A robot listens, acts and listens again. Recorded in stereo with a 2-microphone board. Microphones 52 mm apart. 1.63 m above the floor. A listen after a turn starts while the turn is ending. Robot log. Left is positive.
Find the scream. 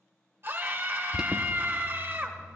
note: The scream: about 55° right or 125° right.
cmd yaw -55
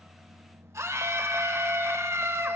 note: So it is at 70° right.
cmd yaw -70
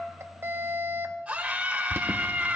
note: The scream is now 25° right.
cmd yaw -25
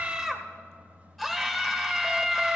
end: Facing the scream, 1 to 2 m away.